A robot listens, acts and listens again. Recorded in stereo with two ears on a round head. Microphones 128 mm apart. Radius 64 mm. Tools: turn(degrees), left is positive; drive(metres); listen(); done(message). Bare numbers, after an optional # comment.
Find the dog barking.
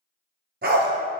turn(-90)
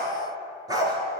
# So it is at 30° right.
turn(-30)
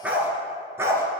# The dog barking is now 20° right.
turn(-20)
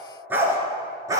# The dog barking is now 25° right.
turn(-25)
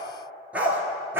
# The dog barking is now 15° right.
turn(-15)
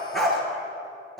done("Found it: a dog barking, straight ahead, 2 to 4 m away.")